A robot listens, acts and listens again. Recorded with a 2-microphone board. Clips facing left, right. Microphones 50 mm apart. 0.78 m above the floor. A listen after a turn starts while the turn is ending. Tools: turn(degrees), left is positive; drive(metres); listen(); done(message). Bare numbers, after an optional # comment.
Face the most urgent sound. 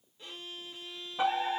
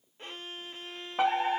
# The fire alarm: about 55° right or 125° right.
turn(-55)
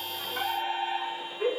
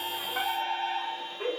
# So it is at 20° right.
turn(-20)
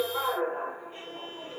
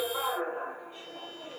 done("Found it: a fire alarm, straight ahead, 2 to 4 m away.")